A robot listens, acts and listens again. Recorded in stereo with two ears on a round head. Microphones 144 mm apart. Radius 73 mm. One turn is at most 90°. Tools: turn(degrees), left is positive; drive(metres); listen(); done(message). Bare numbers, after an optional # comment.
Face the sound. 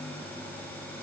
listen()
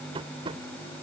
# The tapping: about 35° right or 145° right.
turn(-35)
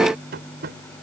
# So it is at 110° right.
turn(-90)
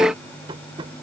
# The tapping is now 30° right.
turn(-30)
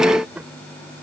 done("Facing the tapping.")